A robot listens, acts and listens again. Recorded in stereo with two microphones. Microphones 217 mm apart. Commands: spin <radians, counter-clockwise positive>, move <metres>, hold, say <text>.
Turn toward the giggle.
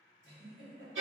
spin -0.96
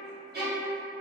hold
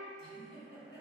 say Found it: a giggle, straight ahead.